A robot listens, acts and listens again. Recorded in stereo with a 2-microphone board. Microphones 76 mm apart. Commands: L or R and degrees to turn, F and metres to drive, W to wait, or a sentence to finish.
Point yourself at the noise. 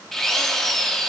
L30
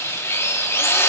L145
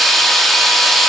Found it: a drill, straight ahead, 1 to 2 m away.